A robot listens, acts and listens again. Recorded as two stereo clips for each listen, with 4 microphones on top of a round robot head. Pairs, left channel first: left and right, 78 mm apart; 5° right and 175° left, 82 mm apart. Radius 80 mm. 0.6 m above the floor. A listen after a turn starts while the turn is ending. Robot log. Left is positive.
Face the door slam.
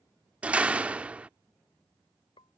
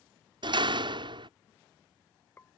note: The door slam: 165° right.
cmd yaw -165
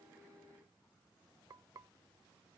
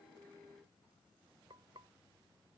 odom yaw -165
end: I heard a door slam from this way, but can't make it out now.